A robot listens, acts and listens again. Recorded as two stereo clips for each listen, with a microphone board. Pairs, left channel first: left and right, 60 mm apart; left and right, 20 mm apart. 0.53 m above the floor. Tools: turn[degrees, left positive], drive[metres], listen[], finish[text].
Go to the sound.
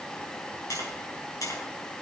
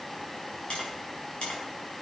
Thought: The tapping: about 75° left or 105° left.
Action: turn[75]
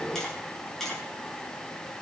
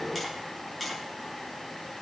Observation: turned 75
Action: drive[1.0]
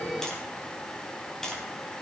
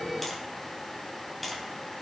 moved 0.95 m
Thought: The tapping is now 10° left.
Action: turn[10]
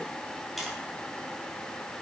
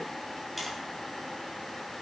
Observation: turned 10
Action: drive[1.0]
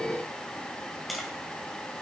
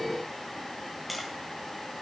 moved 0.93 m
Action: drive[1.0]
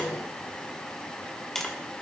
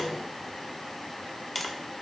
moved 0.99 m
Action: drive[1.0]
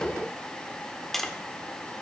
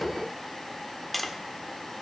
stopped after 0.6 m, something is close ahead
Action: finish[I am next to the tapping.]